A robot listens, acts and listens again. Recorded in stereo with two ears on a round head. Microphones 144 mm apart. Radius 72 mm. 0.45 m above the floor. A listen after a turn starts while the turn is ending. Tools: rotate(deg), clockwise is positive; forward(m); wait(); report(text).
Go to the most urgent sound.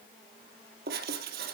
wait()
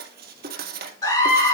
rotate(-25)
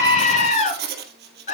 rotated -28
rotate(-125)
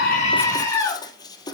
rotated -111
rotate(-15)
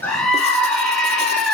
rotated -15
forward(1.0)
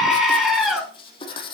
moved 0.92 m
forward(1.0)
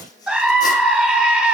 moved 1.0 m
forward(1.0)
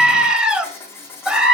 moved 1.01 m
forward(1.0)
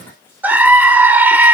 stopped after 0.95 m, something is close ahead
rotate(20)
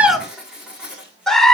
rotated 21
report("Arrived at the scream, straight ahead.")